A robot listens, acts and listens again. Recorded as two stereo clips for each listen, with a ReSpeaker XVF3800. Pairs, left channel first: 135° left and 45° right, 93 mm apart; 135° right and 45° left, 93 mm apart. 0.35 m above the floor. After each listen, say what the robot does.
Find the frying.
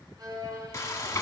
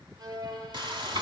Turn 75° left.
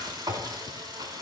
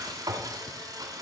Found it: frying, straight ahead.